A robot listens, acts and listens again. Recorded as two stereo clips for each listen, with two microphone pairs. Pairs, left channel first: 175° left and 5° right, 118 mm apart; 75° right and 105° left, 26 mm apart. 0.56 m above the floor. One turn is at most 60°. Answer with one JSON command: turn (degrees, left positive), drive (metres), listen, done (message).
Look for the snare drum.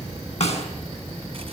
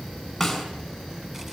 {"turn": -60}
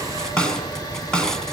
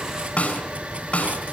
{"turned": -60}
{"turn": -60}
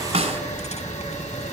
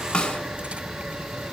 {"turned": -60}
{"turn": -40}
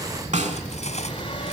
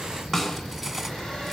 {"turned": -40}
{"done": "Facing the snare drum."}